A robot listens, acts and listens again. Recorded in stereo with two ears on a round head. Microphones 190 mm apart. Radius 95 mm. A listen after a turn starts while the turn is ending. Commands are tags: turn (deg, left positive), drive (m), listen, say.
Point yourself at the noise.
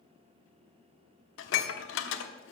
<turn deg="65"/>
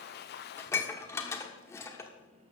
<turn deg="15"/>
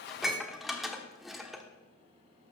<say>Found it: dishes clattering, straight ahead, 1 to 2 m away.</say>